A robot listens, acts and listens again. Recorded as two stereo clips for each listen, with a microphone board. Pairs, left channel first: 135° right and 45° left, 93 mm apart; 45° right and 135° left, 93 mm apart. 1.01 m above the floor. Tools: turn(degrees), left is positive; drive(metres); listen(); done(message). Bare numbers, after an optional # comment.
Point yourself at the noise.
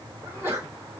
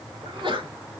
# The sneeze: 110° left.
turn(110)
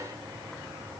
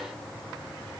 done("Facing where the sneeze came from. I can't hear it now.")